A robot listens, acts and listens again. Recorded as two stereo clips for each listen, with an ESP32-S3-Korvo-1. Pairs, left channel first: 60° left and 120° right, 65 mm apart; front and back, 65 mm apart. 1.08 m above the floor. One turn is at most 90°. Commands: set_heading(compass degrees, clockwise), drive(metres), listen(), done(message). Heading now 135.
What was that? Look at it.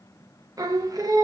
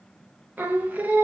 set_heading(225)
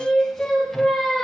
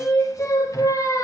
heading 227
set_heading(252)
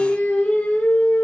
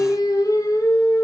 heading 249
done("Found it: singing, straight ahead.")